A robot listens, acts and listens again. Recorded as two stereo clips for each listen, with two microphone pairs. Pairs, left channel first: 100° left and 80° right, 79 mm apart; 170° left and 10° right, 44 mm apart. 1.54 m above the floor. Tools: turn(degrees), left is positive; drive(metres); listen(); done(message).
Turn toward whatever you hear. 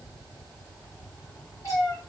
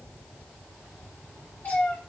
turn(degrees=135)
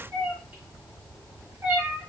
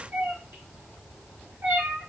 turn(degrees=-20)
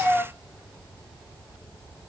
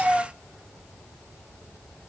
done("Found it: a cat meowing, straight ahead, 1 to 2 m away.")